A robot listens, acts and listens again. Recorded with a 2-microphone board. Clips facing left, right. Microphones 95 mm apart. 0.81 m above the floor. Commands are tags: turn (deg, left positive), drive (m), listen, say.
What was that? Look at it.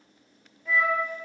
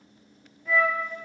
<turn deg="30"/>
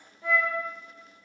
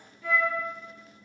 <turn deg="155"/>
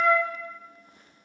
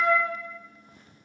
<turn deg="-10"/>
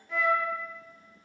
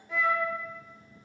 <say>Facing the flute.</say>